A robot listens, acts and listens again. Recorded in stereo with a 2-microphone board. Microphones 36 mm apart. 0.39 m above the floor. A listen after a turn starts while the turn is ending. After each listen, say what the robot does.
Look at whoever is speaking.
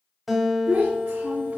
Turn 45° right.
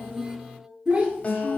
Turn 20° right.
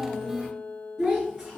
Turn 10° right.
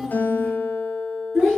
Turn 10° right.
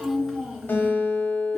Turn 10° right.
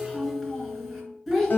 Facing the child speaking, 2 to 4 m away.